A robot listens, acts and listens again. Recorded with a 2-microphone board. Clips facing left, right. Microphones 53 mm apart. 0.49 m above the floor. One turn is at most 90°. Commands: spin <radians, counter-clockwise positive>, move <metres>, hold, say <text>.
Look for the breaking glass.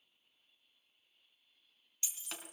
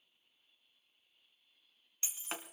spin -0.52
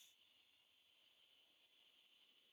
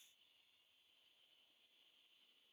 hold
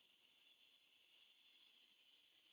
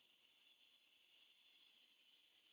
say I heard breaking glass, but can't make it out now. It was about straight ahead or 120° right.